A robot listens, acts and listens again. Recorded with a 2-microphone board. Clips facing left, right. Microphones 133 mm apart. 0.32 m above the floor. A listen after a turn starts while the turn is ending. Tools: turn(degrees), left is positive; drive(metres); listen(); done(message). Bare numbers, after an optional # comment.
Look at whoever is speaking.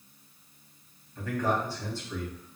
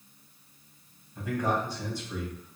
# The man speaking: about 15° right or 165° right.
turn(-15)
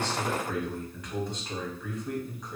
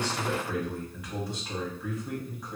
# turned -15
done("Facing the man speaking.")